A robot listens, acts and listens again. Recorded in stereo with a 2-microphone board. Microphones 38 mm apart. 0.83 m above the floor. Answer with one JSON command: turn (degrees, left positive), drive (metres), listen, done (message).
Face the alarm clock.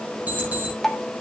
{"turn": -45}
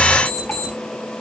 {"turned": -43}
{"done": "Facing the alarm clock."}